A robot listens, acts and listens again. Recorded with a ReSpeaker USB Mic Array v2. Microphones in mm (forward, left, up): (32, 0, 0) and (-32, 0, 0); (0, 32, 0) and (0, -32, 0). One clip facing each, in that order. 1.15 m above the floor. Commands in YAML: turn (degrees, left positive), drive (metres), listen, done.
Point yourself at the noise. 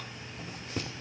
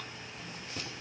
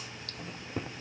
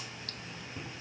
turn: 55
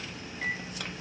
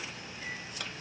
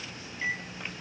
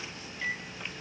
turn: 15
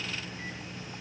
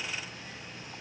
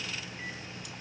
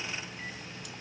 listen: true
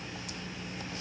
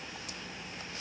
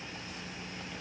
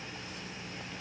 listen: true
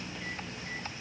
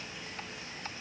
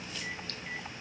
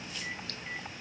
done: "I heard a microwave from this way, but can't make it out now."